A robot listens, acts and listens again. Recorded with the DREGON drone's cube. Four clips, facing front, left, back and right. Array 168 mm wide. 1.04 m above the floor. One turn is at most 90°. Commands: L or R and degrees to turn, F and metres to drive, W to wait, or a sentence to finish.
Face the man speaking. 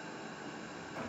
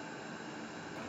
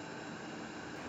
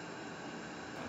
W
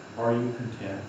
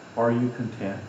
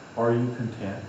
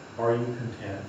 L90
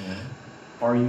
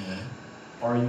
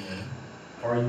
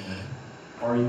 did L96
Facing the man speaking.